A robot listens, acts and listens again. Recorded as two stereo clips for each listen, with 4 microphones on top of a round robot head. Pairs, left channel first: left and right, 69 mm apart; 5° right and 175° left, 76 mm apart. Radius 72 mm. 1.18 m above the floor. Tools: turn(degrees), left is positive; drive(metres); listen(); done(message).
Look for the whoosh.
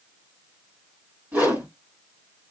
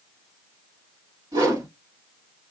turn(degrees=-160)
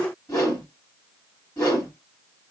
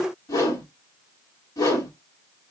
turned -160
turn(degrees=30)
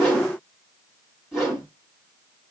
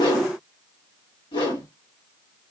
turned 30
done("Facing the whoosh, 2 to 4 m away.")